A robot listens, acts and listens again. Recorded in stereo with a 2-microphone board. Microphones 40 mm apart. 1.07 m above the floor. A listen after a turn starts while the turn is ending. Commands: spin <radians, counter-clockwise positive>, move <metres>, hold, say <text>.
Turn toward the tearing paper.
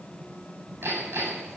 hold
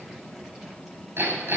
hold
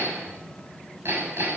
say I can't make out tearing paper, only hammering.